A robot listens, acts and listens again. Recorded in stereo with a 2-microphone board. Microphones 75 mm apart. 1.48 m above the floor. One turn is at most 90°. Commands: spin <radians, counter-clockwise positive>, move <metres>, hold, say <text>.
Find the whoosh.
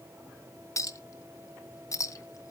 hold
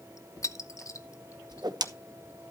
spin -1.31
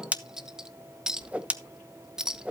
spin -0.35
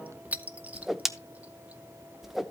say Found it: a whoosh, straight ahead.